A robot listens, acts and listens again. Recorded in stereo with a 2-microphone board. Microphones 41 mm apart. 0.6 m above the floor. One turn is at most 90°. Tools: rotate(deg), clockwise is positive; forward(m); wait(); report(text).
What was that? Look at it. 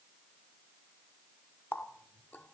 rotate(-45)
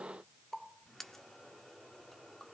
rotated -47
rotate(-10)
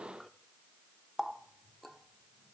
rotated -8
report("Found it: a running tap, straight ahead, under 1 m away.")